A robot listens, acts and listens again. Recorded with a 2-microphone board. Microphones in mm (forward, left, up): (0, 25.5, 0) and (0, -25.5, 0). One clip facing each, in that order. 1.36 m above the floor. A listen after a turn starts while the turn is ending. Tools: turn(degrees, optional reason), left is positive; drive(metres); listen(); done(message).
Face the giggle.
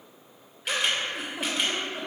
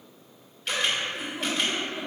turn(degrees=90)
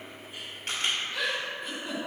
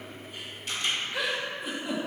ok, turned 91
turn(degrees=-10, reason="So it is at 10° right.")
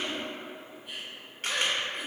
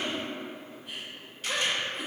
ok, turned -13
done("Facing the giggle.")